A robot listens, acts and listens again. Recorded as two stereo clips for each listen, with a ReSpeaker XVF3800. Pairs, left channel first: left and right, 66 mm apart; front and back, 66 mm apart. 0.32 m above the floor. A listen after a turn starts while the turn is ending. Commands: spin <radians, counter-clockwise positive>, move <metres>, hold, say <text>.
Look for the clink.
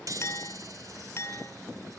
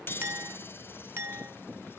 spin 2.36
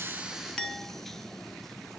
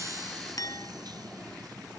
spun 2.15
spin 0.17
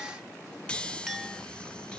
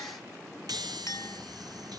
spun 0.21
say Found it: a clink, straight ahead, 1 to 2 m away.